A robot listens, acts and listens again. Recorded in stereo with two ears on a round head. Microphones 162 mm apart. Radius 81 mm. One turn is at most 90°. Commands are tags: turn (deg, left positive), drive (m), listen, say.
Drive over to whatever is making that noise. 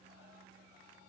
<listen/>
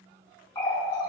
<turn deg="25"/>
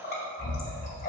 <turn deg="90"/>
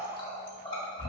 <turn deg="30"/>
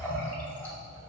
<turn deg="10"/>
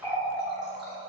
<drive m="1.0"/>
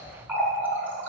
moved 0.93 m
<turn deg="-10"/>
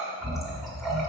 <drive m="1.0"/>
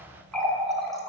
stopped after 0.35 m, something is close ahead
<say>Arrived at the running tap, straight ahead.</say>